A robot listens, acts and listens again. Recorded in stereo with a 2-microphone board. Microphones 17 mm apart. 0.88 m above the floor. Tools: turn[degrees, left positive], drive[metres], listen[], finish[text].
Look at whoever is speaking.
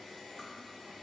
Action: listen[]
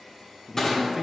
Thought: The man speaking: about 20° right or 160° right.
Action: turn[-20]
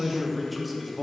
Action: finish[Facing the man speaking, 1 to 2 m away.]